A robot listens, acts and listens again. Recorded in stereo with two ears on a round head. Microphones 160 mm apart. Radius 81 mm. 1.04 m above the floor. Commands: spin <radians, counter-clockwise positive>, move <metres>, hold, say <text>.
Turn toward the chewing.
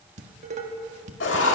hold
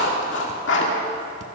hold
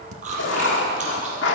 spin -0.79
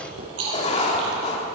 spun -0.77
spin -1.66
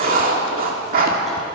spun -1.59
hold
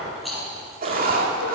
say Facing the chewing.